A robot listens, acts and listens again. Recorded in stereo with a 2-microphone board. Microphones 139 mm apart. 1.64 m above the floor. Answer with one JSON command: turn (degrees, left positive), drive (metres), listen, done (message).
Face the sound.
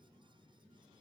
{"listen": true}
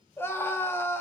{"turn": 15}
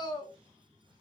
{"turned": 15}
{"turn": 150}
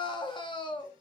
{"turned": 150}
{"turn": 35}
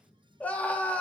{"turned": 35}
{"turn": 10}
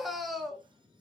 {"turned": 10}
{"done": "Found it: a scream, straight ahead."}